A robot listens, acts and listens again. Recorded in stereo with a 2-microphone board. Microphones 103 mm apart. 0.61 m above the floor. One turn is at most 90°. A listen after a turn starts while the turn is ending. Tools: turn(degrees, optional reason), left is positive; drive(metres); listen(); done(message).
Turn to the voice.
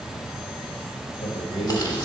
turn(degrees=65, reason="The man speaking: about 65° left or 115° left.")
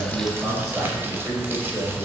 turn(degrees=-10, reason="So it is at 10° right.")
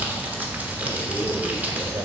turn(degrees=-25, reason="The man speaking is now 25° right.")
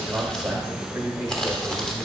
turn(degrees=-15, reason="The man speaking is now 15° right.")
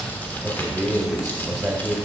done("Facing the man speaking.")